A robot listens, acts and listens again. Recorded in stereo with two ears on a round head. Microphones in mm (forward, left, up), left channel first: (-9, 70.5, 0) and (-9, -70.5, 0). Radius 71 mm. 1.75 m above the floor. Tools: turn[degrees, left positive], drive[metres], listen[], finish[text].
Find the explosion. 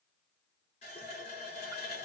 Action: listen[]
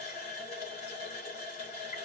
Action: listen[]
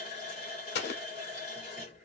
Thought: The explosion: about 75° left or 105° left.
Action: turn[75]
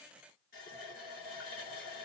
Action: listen[]
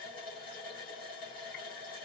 Action: finish[I heard an explosion, but can't make it out now. It was about straight ahead or 30° left.]